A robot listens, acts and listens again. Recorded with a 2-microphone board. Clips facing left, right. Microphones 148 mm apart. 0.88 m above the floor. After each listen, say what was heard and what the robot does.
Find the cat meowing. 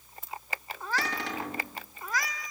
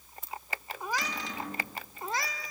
The cat meowing: about 35° right or 145° right. Turn 35° right.
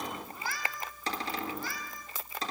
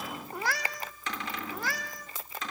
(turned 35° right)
So it is at 95° right. Turn 95° right.
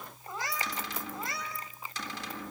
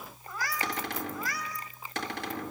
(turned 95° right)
The cat meowing is now 25° left. Turn 25° left.
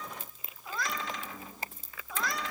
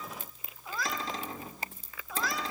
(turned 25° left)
Facing the cat meowing, 2 to 4 m away.